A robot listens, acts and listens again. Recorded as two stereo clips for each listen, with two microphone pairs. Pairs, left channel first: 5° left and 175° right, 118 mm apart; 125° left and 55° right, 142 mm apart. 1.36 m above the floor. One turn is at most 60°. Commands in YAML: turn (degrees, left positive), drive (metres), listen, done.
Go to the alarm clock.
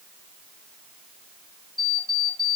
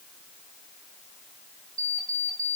turn: -40
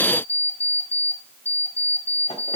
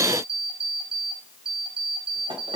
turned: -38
drive: 1.0
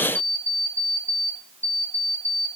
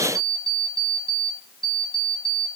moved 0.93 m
drive: 1.0
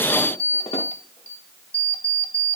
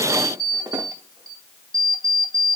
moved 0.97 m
drive: 1.0
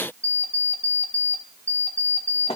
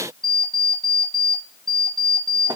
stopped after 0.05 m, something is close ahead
done: "I am next to the alarm clock."